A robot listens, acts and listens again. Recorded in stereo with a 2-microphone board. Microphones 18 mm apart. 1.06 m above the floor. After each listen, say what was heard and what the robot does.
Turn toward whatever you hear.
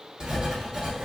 The writing: about 40° right or 140° right. Turn 40° right.
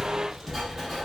Facing the writing, 1 to 2 m away.